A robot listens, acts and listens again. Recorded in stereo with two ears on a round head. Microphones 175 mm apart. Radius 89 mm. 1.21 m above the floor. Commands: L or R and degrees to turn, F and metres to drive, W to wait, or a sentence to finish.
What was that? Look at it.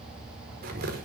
R50
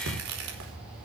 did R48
R80
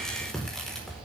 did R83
Facing the tearing paper, over 4 m away.